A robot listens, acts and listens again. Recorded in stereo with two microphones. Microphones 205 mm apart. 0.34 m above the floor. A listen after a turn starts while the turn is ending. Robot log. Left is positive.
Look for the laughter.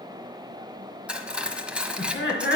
note: The laughter: about 60° left or 120° left.
cmd yaw +60
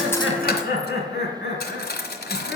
note: So it is at 55° left.
cmd yaw +55
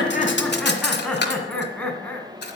note: The laughter is now 10° left.
cmd yaw +10
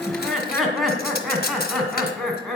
end: Facing the laughter.